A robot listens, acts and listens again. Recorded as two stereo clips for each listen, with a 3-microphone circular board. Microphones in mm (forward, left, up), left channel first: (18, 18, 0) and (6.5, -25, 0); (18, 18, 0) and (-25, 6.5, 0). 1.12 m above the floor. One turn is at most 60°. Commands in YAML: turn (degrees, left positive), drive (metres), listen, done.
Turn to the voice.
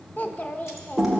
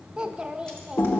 turn: 60
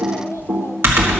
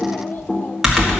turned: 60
turn: 60
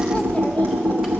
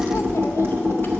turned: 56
turn: 10
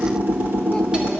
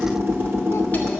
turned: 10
done: "Facing where the child speaking came from. I can't hear it now."